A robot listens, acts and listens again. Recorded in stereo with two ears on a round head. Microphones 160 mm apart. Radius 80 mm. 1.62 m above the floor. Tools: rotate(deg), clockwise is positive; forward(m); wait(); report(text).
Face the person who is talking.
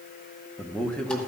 rotate(-30)
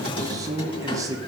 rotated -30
rotate(20)
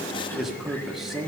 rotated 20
report("Found it: a man speaking, straight ahead.")